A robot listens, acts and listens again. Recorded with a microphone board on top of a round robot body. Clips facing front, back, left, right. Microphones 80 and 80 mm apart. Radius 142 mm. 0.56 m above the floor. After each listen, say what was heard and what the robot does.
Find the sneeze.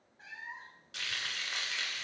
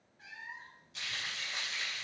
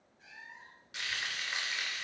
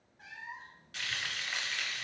Keep listening.
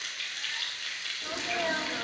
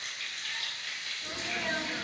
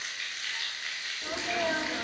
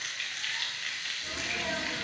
The sneeze: 60° left. Turn 60° left.
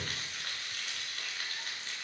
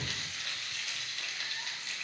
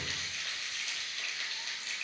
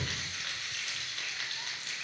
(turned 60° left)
Facing where the sneeze came from. I can't hear it now.